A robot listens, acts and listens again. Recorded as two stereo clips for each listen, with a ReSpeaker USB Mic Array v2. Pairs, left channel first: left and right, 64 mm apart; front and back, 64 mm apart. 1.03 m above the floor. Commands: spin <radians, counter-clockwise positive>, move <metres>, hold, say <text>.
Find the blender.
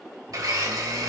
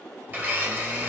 spin -2.09
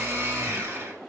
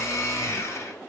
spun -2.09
spin -0.79
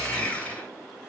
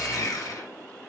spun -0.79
spin 0.35
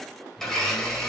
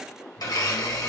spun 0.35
say Found it: a blender, straight ahead, 1 to 2 m away.